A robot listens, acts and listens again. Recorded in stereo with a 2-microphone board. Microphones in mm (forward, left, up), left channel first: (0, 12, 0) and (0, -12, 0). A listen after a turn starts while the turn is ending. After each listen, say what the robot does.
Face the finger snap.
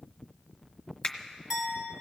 Turn 45° left.
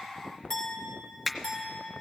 Facing the finger snap.